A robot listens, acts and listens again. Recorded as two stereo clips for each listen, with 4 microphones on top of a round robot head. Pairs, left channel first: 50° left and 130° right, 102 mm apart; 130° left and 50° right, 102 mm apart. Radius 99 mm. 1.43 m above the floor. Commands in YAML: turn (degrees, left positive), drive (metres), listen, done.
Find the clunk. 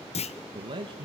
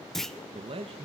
turn: 45
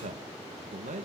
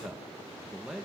done: "Facing where the clunk came from. I can't hear it now."